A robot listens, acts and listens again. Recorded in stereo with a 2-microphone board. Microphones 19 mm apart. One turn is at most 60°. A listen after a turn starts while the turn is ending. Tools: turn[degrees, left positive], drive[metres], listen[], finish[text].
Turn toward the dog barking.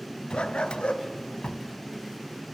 Action: turn[60]
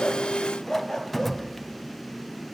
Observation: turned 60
Thought: So it is at 25° left.
Action: turn[25]
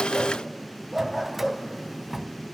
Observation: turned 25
Action: finish[Found it: a dog barking, straight ahead.]